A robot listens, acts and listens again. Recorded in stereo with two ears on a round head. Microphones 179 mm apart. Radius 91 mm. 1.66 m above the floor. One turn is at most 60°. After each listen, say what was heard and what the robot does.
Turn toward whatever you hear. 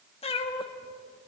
The cat meowing: about 25° left or 155° left. Turn 25° left.
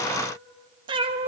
So it is at 30° right. Turn 30° right.
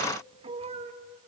The cat meowing is now 35° right. Turn 35° right.
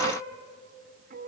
The cat meowing is now 45° right. Turn 45° right.
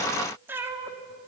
The cat meowing is now 10° right. Turn 10° right.
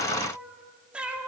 Found it: a cat meowing, straight ahead, 2 to 4 m away.